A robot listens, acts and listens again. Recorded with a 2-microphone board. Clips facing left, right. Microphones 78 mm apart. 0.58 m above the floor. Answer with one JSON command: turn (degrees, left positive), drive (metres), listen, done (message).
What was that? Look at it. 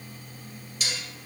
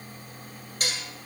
{"turn": -45}
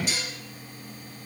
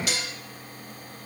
{"turn": -85}
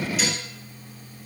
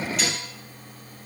{"listen": true}
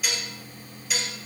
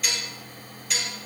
{"done": "Facing the dishes clattering, 1 to 2 m away."}